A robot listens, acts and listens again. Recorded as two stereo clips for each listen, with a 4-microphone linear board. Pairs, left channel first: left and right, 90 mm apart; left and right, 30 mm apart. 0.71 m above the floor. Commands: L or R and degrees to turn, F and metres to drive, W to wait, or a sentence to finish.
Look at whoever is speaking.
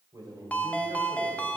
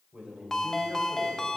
R55
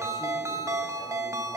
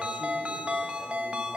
W
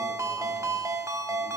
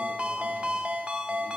W
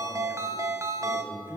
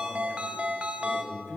Facing the man speaking, 2 to 4 m away.